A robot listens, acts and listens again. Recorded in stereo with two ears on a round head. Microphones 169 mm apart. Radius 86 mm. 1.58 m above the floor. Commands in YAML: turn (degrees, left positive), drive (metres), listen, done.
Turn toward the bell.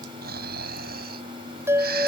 turn: -30
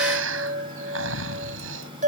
turn: -135
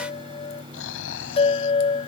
turn: 30
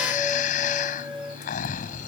listen: true
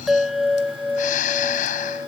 done: "Facing the bell."